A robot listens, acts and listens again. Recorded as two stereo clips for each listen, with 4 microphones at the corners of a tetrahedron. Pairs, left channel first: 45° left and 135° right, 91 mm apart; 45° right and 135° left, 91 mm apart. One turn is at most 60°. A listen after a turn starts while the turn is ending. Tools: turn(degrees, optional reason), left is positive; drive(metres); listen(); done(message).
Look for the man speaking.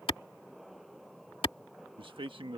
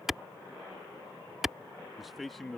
turn(degrees=-60, reason="The man speaking: 130° right.")
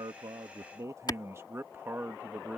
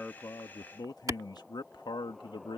turn(degrees=-60, reason="The man speaking is now 60° right.")
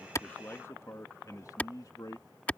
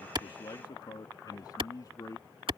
done("Facing the man speaking.")